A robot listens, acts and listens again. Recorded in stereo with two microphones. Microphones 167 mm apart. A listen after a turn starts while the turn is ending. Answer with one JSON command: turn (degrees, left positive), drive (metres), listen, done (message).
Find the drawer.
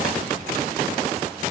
{"listen": true}
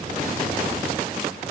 {"listen": true}
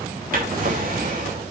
{"turn": -65}
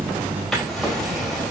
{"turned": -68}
{"done": "Facing the drawer, over 4 m away."}